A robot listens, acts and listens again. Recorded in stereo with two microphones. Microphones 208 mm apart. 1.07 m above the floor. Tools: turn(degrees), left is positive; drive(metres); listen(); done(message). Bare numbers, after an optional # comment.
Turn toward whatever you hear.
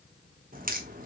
# The crack: about 40° right or 140° right.
turn(-40)
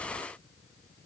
listen()
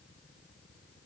done("I heard a crack, but can't make it out now. It was about straight ahead or 100° right.")